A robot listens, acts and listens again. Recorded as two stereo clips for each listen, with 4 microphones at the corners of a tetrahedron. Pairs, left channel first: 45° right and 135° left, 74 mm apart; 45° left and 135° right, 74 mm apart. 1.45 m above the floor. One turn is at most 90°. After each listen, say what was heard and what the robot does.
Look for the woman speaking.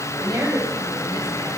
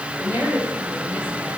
The woman speaking: 165° left. Turn 90° left.
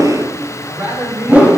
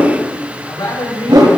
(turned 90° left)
The woman speaking is now 70° left. Turn 70° left.
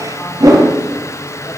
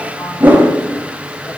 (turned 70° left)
Keep listening.
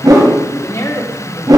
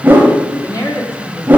Found it: a woman speaking, straight ahead.